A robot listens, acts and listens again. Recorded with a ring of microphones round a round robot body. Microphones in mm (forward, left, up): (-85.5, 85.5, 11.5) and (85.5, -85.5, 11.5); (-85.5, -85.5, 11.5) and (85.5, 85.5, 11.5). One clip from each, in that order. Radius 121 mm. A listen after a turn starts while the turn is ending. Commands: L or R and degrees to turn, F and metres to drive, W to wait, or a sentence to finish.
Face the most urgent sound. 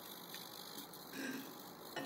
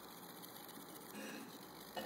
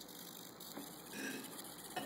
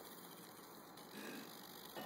W
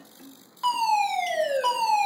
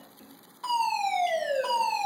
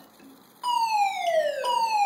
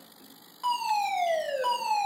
L120
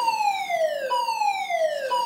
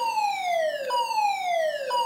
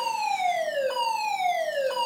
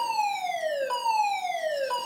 L10
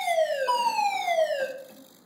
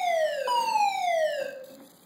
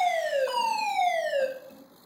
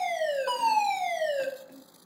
Found it: a fire alarm, straight ahead.